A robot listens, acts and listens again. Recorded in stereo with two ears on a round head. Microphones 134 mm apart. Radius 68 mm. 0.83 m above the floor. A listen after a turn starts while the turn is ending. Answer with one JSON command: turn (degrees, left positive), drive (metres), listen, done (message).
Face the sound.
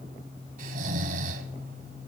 {"turn": -60}
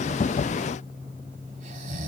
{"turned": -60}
{"turn": -55}
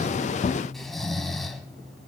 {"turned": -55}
{"done": "Found it: snoring, straight ahead, 1 to 2 m away."}